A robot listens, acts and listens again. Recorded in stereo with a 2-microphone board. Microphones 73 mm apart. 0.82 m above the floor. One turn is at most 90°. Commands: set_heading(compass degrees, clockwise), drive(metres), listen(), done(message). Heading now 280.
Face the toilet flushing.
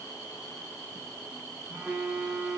listen()
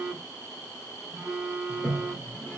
set_heading(255)
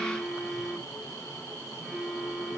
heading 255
listen()
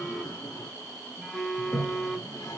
set_heading(165)
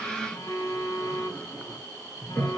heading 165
set_heading(145)
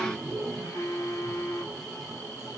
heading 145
done("Found it: a toilet flushing, straight ahead.")